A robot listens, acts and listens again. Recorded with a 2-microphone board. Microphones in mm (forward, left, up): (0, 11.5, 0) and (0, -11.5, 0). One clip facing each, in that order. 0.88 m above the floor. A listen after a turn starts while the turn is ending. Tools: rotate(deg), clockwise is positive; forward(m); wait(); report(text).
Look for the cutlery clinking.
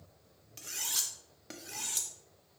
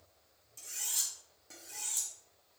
rotate(-50)
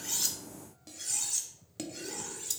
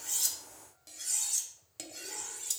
report("Found it: cutlery clinking, straight ahead, under 1 m away.")